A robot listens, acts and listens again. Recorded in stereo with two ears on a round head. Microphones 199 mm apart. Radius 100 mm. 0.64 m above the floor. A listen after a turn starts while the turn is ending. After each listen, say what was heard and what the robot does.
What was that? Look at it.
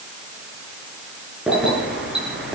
Turn 30° right.
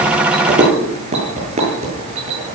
So it is at 145° right. Turn 145° right.
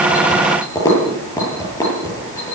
The keys jangling is now 15° left. Turn 15° left.
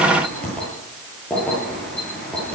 Facing the keys jangling.